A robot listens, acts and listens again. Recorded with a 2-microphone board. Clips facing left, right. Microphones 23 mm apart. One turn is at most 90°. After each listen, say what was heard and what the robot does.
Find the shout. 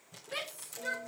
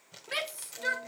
The shout: about 75° right or 105° right. Turn 75° right.
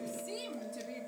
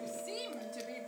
Keep listening.
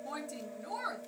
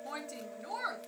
So it is at 25° right. Turn 25° right.
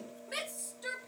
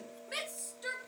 The shout is now 10° right. Turn 10° right.
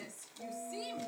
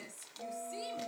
Keep listening.
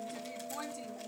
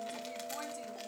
Keep listening.
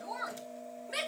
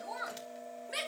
Facing the shout, 2 to 4 m away.